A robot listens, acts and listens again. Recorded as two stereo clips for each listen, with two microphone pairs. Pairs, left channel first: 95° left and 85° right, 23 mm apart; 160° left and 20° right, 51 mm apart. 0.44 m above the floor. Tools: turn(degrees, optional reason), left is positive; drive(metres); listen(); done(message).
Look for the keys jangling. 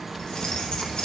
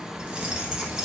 turn(degrees=60, reason="The keys jangling: 60° left.")
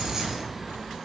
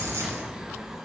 turn(degrees=-10, reason="The keys jangling is now 10° right.")
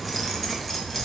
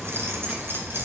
turn(degrees=25, reason="The keys jangling is now 25° left.")
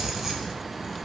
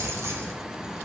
done("Found it: keys jangling, straight ahead, 1 to 2 m away.")